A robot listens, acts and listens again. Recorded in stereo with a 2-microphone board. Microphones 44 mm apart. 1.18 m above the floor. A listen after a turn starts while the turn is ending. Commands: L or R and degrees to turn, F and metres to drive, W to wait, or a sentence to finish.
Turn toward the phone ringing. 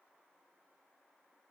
W
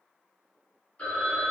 L35
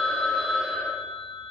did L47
R10
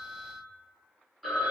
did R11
Found it: a phone ringing, straight ahead, 1 to 2 m away.